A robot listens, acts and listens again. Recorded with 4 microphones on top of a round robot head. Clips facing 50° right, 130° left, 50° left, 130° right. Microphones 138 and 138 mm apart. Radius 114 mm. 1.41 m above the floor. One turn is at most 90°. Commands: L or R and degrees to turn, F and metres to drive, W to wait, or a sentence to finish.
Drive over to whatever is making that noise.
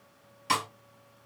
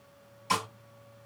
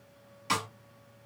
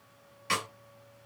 R15
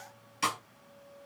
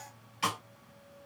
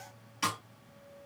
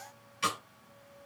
F1.0
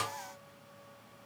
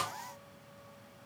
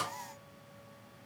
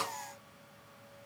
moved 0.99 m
F1.0
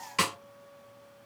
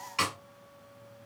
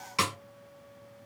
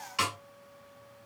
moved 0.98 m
F1.0
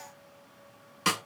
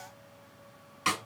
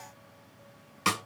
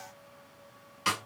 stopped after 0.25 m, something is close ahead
I am next to the snare drum.